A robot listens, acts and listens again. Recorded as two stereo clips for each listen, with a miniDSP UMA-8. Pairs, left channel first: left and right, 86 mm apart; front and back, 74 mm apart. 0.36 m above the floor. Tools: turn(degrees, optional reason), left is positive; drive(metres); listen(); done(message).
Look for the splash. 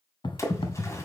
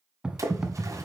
turn(degrees=140, reason="The splash: 140° left.")
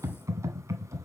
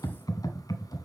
done("I heard a splash from this way, but can't make it out now.")